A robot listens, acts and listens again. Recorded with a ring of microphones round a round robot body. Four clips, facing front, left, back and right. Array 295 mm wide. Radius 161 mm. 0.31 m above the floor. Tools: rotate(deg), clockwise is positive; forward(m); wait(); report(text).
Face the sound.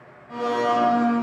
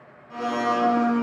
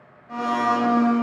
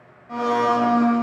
rotate(95)
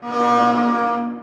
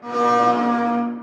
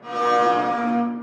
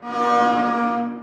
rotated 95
report("Found it: a blender, straight ahead.")